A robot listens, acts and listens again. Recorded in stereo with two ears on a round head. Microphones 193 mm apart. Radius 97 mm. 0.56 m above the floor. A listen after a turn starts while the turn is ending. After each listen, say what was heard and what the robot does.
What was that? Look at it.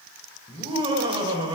The laughter: about 25° right or 155° right. Turn 25° right.
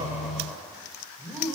Facing the laughter, 2 to 4 m away.